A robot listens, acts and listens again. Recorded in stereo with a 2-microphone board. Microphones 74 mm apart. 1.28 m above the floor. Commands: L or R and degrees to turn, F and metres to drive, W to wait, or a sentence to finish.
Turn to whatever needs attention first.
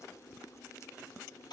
W
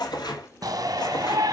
R50
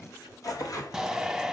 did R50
Facing the shout.